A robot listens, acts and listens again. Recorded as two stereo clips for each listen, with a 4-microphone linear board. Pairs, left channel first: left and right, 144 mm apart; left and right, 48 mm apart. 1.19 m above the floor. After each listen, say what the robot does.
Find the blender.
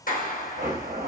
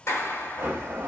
Turn 70° right.
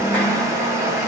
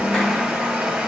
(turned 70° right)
Turn 20° right.
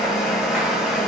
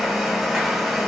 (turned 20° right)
Found it: a blender, straight ahead, under 1 m away.